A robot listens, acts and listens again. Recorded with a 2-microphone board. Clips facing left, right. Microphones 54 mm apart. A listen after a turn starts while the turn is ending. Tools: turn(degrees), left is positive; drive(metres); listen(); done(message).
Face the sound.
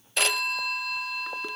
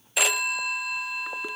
turn(degrees=-30)
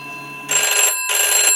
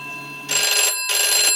turn(degrees=25)
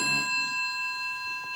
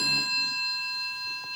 turn(degrees=25)
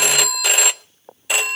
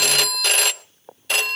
turn(degrees=15)
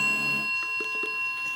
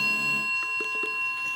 done("Facing the phone ringing, under 1 m away.")